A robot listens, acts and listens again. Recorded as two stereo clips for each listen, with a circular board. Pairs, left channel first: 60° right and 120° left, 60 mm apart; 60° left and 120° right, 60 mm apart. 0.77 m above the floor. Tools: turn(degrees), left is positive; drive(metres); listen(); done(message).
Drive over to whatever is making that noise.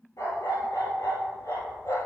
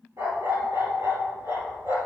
turn(degrees=-90)
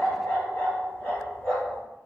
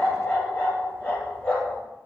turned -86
drive(metres=1.0)
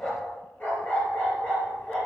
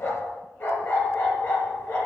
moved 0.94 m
drive(metres=1.0)
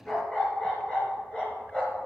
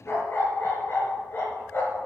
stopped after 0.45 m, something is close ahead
turn(degrees=10)
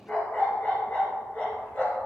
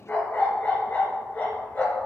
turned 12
done("Blocked. The dog barking is further on, straight ahead.")